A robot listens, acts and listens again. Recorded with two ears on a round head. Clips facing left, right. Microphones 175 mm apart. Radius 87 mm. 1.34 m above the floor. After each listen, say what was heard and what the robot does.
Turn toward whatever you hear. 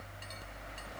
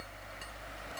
Keep listening.
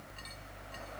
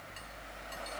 Keep listening.
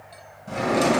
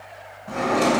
The drawer: about 35° left or 145° left. Turn 35° left.
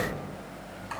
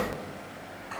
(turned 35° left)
Keep listening.
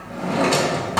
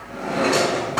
So it is at 110° left. Turn 110° left.
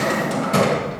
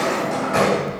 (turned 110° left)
The drawer is now 45° left. Turn 45° left.
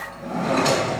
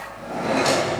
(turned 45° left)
Facing the drawer, 2 to 4 m away.